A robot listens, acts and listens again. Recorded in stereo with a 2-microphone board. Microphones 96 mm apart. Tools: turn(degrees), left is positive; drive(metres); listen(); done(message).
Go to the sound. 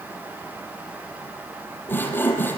turn(degrees=20)
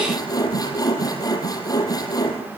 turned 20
turn(degrees=140)
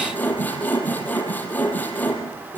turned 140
turn(degrees=20)
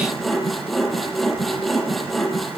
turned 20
drive(metres=1.0)
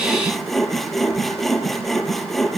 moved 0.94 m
drive(metres=1.0)
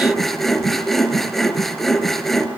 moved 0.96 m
drive(metres=1.0)
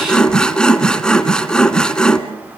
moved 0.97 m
turn(degrees=10)
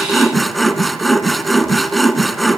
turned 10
drive(metres=1.0)
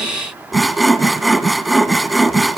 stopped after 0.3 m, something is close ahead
done("I am next to the sawing.")